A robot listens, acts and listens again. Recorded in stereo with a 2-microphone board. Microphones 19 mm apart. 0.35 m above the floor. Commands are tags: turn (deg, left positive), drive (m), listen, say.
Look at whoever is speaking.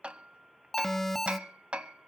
<listen/>
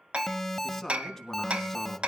<turn deg="30"/>
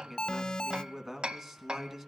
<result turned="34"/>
<turn deg="-20"/>
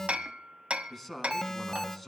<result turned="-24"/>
<say>Facing the man speaking.</say>